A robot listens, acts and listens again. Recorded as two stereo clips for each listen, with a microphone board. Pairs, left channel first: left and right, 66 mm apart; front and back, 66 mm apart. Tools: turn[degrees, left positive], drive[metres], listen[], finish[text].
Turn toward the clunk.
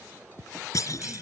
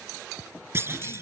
Thought: The clunk: 125° left.
Action: turn[125]
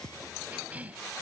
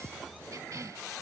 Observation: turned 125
Action: finish[Facing where the clunk came from. I can't hear it now.]